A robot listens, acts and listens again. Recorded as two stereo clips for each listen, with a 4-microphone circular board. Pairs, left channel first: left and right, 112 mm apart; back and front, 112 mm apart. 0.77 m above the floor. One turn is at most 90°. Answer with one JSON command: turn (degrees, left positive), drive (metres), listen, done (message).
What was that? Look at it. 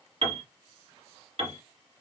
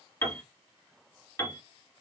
{"turn": -90}
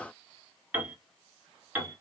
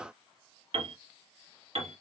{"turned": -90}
{"turn": -20}
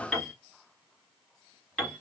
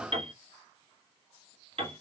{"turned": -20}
{"done": "Facing the piano, 1 to 2 m away."}